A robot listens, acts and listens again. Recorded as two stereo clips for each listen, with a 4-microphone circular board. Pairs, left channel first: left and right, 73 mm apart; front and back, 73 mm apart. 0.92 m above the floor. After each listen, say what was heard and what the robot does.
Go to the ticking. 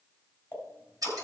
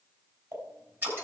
The ticking: 150° left. Turn 150° left.
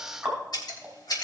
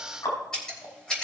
The ticking is now 10° right. Turn 10° right.
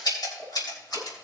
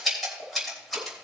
Keep listening.
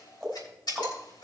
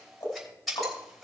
Drive 1.0 m forward.
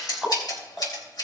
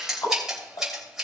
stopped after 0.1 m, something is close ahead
Blocked. The ticking is further on, straight ahead.